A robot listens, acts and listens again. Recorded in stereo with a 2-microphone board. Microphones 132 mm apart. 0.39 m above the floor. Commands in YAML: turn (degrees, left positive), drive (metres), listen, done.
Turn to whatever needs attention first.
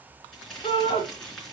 turn: 35
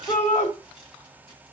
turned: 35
turn: 105
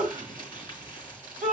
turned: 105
done: "Facing the shout."